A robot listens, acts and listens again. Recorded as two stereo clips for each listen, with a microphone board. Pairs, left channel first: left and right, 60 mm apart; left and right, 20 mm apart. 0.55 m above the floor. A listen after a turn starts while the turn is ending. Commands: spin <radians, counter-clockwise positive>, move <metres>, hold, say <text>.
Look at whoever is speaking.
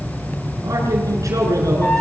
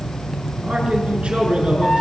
spin -1.22
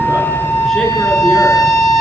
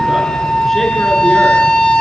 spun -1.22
hold
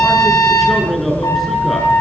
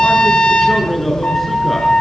say Found it: a man speaking, straight ahead.